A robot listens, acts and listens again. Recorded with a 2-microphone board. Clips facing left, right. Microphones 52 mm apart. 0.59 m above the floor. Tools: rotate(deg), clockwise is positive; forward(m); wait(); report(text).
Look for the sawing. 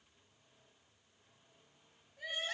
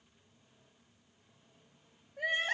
wait()
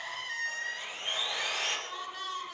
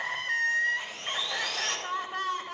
rotate(-20)
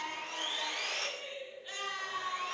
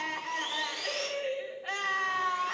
rotate(-140)
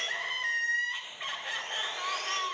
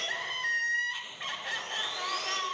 wait()
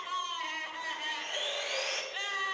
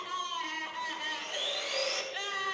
rotate(-40)
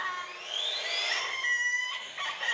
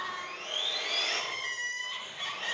report("Found it: sawing, straight ahead, over 4 m away.")